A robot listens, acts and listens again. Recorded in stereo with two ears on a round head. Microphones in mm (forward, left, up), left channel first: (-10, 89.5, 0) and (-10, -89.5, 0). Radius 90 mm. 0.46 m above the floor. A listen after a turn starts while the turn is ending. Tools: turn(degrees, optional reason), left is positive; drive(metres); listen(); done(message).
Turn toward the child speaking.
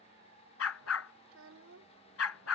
turn(degrees=-90)
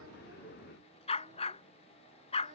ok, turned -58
turn(degrees=-30, reason="Nothing new. It was at 30° right.")
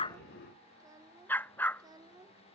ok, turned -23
turn(degrees=-20, reason="The child speaking is now 20° right.")
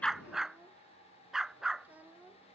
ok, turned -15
turn(degrees=-10, reason="The child speaking is now 10° right.")
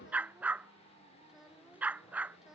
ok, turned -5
done("Found it: a child speaking, straight ahead.")